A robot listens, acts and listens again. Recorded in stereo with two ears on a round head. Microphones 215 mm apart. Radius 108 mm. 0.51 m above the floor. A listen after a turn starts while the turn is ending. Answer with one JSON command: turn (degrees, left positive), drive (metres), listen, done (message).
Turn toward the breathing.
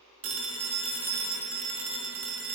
{"listen": true}
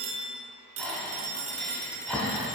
{"turn": 30}
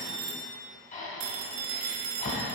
{"turn": 145}
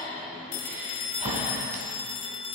{"turn": -30}
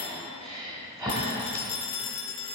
{"turn": -15}
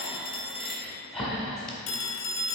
{"done": "Found it: breathing, straight ahead."}